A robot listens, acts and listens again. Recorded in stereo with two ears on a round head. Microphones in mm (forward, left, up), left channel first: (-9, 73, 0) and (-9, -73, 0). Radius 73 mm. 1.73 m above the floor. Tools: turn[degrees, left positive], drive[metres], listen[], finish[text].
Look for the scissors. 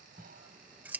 Action: turn[-30]
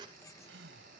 Action: listen[]
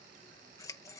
Thought: So it is at 25° left.
Action: turn[25]
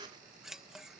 Action: finish[Facing the scissors.]